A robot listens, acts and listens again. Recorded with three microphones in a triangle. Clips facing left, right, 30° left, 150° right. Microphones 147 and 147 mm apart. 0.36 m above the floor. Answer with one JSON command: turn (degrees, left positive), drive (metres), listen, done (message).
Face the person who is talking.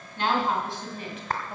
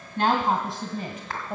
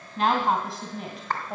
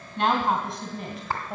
{"turn": -60}
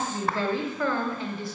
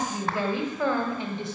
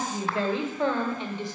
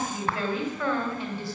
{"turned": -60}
{"turn": -35}
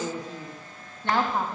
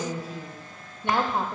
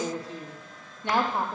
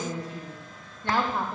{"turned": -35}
{"turn": -40}
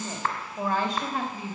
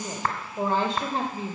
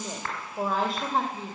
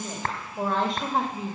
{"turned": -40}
{"turn": -70}
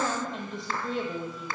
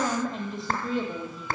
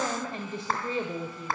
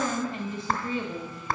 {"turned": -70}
{"done": "Facing the woman speaking."}